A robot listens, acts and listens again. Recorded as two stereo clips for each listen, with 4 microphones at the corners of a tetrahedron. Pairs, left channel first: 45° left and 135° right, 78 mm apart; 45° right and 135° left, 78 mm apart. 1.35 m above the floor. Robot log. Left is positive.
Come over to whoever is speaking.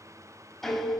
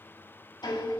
cmd idle
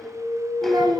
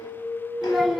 note: The child speaking: 140° right.
cmd yaw -140
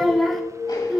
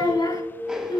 note: The child speaking is now 45° right.
cmd yaw -45
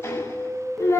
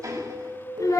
cmd fwd 1.0
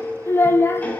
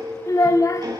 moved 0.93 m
note: The child speaking is now 10° right.
cmd yaw -10
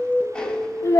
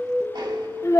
cmd fwd 1.0
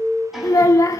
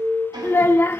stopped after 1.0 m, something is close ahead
note: The child speaking is now 10° left.
cmd yaw +10
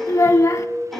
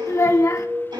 end: Arrived at the child speaking, straight ahead.